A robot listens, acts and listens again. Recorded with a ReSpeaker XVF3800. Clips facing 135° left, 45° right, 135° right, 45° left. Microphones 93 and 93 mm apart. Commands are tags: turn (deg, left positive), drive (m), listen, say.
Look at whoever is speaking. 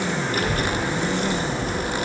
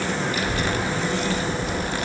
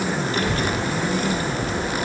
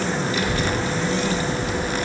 <turn deg="180"/>
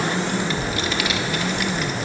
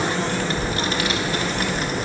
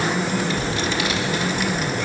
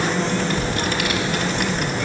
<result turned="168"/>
<turn deg="10"/>
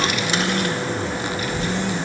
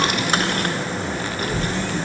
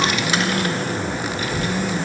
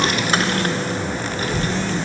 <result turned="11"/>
<say>Facing the child speaking, 1 to 2 m away.</say>